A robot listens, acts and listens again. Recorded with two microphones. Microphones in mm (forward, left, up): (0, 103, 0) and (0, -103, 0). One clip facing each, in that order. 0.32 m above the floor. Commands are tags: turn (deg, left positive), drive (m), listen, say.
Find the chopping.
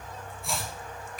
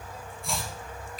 <turn deg="30"/>
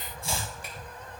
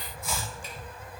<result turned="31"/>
<turn deg="145"/>
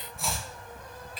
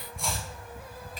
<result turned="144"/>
<say>Found it: chopping, straight ahead.</say>